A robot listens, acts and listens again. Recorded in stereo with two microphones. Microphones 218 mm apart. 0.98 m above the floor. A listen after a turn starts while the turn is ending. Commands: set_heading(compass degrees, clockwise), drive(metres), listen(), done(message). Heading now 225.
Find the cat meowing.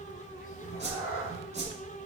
set_heading(135)
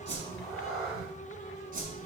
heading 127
done("Found it: a cat meowing, straight ahead, 2 to 4 m away.")